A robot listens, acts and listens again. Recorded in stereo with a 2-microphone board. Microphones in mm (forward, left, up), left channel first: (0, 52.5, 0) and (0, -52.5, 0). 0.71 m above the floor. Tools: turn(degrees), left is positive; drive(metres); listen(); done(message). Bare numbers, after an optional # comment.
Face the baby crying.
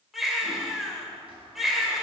turn(-30)
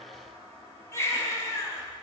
# So it is at 25° left.
turn(25)
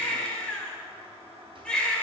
# The baby crying is now 10° left.
turn(10)
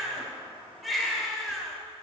done("Facing the baby crying.")